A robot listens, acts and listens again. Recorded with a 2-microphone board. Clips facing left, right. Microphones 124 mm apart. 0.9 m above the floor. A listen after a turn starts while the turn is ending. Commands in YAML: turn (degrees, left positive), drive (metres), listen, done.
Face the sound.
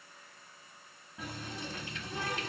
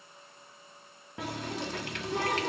turn: -70
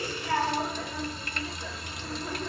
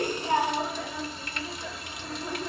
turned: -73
done: "Found it: a running tap, straight ahead, under 1 m away."